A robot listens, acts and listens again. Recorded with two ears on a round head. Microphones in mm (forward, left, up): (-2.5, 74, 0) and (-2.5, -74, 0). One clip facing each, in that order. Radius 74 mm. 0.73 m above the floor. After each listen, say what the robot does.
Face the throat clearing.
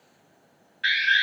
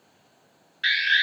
Keep listening.
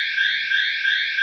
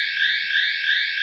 Keep listening.
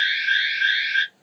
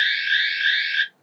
I can't make out throat clearing to turn to.